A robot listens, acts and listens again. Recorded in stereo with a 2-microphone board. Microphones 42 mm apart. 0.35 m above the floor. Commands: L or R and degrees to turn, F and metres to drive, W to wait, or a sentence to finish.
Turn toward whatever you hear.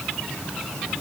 W
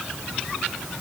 W
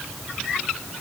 I can't make out anything.